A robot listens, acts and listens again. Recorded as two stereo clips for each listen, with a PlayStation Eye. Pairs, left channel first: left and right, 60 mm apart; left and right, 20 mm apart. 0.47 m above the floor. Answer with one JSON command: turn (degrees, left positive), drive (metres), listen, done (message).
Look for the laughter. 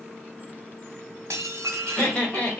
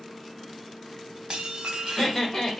{"turn": 20}
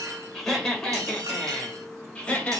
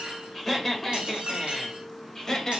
{"turn": 20}
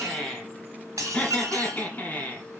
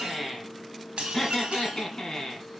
{"turn": 25}
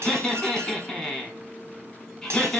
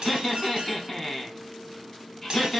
{"turn": 30}
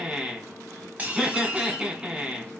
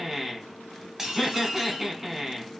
{"turn": -15}
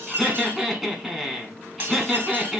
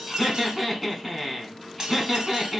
{"done": "Facing the laughter."}